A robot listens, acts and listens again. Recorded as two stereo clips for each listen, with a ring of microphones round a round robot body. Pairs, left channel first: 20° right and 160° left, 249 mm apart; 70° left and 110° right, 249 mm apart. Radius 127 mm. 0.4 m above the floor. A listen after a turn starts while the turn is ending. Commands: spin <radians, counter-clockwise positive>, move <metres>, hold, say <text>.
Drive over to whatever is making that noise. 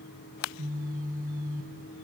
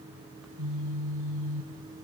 spin -2.53
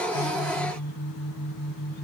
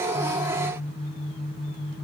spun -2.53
move 1.0
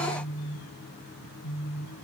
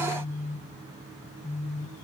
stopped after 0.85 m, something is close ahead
say Blocked. The phone buzzing is further on, straight ahead.